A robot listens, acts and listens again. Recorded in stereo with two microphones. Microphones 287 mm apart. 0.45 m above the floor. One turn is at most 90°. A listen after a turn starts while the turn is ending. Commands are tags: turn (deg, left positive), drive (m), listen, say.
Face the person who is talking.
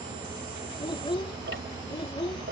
<turn deg="15"/>
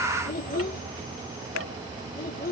<turn deg="90"/>
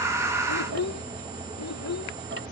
<turn deg="85"/>
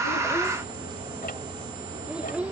<say>Facing the child speaking.</say>